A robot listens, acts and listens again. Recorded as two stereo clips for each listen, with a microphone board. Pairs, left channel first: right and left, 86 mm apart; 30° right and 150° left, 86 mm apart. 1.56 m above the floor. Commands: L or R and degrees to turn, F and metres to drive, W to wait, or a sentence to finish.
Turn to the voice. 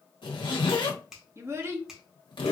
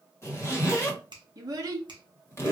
L140
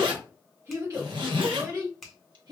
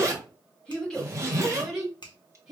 L60
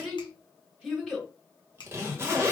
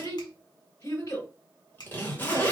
Facing the child speaking.